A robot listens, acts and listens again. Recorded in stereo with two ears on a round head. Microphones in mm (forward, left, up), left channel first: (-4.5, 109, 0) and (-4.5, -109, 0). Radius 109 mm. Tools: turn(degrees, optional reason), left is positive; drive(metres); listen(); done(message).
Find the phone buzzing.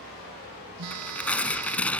turn(degrees=-70, reason="The phone buzzing: about 70° right or 110° right.")
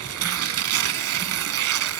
listen()
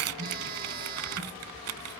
turn(degrees=-35, reason="So it is at 35° right.")
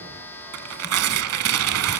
turn(degrees=10, reason="The phone buzzing is now 10° left.")
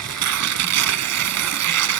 listen()
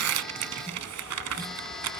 listen()
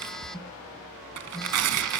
done("Facing the phone buzzing, under 1 m away.")